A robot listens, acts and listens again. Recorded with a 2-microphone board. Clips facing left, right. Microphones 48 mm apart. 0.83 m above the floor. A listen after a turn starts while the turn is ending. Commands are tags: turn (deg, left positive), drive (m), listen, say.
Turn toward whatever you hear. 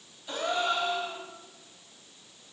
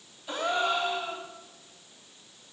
<turn deg="-30"/>
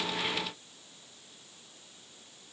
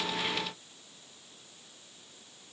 <listen/>
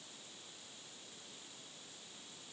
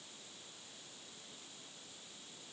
<say>I heard a gasp, but can't make it out now. It was about 25° left or 145° right.</say>